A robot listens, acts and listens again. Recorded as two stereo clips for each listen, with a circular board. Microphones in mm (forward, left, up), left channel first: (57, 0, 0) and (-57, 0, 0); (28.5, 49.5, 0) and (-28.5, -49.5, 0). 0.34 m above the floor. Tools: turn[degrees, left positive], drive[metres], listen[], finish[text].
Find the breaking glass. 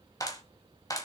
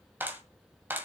Action: listen[]
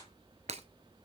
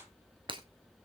Thought: The breaking glass: 165° right.
Action: turn[-165]
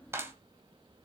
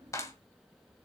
Action: finish[I heard breaking glass from this way, but can't make it out now.]